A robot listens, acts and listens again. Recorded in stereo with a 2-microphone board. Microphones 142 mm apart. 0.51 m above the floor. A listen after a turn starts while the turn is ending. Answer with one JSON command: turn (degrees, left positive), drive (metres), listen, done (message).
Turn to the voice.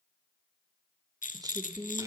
{"turn": -25}
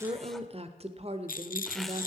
{"turn": -125}
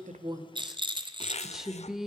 {"done": "Found it: a woman speaking, straight ahead, 1 to 2 m away."}